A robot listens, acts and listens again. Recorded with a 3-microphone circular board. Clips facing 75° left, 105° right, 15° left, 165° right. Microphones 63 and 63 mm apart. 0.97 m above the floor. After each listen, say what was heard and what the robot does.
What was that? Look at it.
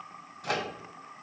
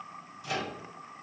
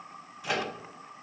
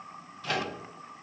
The microwave: 95° left. Turn 95° left.
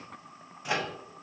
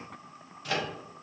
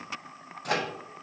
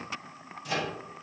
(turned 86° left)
Facing the microwave, under 1 m away.